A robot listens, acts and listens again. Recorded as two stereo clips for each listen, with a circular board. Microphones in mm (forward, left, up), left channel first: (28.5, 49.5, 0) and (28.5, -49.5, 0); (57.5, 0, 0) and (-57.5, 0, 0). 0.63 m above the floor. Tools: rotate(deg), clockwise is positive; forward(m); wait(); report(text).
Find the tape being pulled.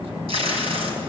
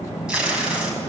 rotate(100)
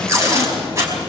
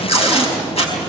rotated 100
rotate(30)
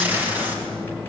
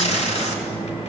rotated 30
rotate(15)
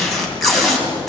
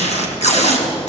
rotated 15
report("Facing the tape being pulled.")